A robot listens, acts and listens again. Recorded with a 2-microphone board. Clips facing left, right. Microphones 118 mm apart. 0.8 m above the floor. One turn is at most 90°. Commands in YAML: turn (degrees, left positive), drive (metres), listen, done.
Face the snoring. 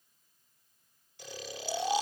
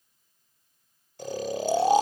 turn: -45
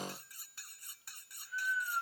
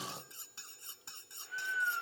turn: -90
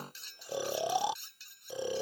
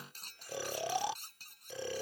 turn: 20
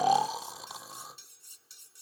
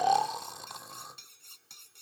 done: "Facing the snoring."